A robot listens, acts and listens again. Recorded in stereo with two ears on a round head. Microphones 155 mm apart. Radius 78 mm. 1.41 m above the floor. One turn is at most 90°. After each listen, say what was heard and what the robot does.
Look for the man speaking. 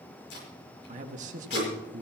The man speaking: about 50° right or 130° right. Turn 50° right.
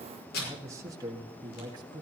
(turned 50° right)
So it is at 25° right. Turn 25° right.
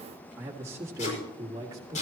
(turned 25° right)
The man speaking is now 20° right. Turn 20° right.
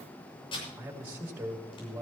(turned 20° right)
The man speaking is now 10° right. Turn 10° right.
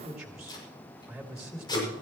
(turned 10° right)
Found it: a man speaking, straight ahead.